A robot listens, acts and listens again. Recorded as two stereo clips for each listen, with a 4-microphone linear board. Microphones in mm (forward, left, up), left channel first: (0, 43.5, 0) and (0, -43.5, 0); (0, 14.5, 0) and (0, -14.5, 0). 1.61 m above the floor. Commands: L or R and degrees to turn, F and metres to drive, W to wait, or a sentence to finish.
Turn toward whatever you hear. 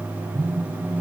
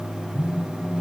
R30
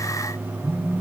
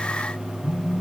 Found it: a phone buzzing, straight ahead.